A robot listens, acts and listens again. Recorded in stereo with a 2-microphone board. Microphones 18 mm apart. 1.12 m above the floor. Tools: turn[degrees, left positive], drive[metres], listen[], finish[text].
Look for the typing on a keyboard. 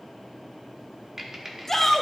Thought: The typing on a keyboard: about 20° right or 160° right.
Action: turn[-20]
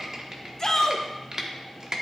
Thought: So it is at 140° right.
Action: turn[-140]
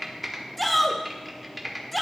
Action: finish[Facing the typing on a keyboard.]